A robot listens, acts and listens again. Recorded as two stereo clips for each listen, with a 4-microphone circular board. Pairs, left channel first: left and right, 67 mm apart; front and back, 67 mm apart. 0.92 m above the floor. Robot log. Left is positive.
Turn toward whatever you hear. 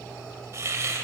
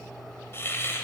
note: The hiss: 50° right.
cmd yaw -50
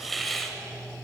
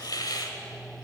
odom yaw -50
end: Facing the hiss, 1 to 2 m away.